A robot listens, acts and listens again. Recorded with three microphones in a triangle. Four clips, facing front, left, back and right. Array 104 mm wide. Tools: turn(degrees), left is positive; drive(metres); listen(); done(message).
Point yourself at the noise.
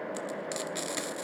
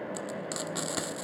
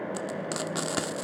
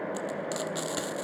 turn(degrees=175)
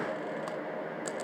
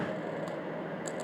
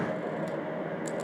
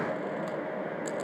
listen()
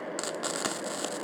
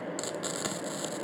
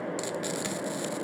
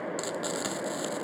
done("Facing the frying, 1 to 2 m away.")